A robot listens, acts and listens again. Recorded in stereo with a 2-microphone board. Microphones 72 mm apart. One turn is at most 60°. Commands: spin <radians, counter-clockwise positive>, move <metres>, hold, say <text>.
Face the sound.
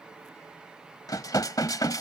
spin 1.05
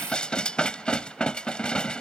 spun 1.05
spin 0.26
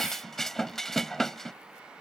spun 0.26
say Facing the dishes clattering.